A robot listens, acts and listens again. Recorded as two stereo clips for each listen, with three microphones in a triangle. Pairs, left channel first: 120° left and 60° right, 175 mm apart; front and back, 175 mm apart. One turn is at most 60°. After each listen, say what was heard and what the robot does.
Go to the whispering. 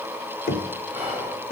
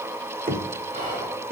The whispering: 140° right. Turn 60° right.
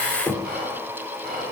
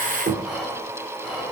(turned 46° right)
The whispering is now 90° right. Turn 60° right.
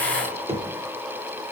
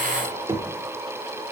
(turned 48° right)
Nothing new. It was at 45° right. Turn 45° right.
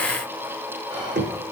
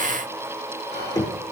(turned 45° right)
Drive 1.0 m forward.
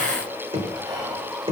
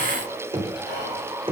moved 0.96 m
Drive 1.0 m forward.
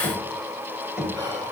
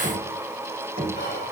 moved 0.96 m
Drive 1.0 m forward.
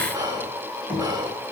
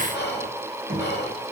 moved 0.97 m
The whispering is now 10° left. Turn 10° left.
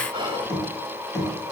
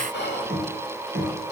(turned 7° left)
Drive 1.0 m forward.
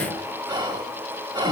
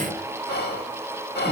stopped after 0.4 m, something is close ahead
Arrived at the whispering, straight ahead.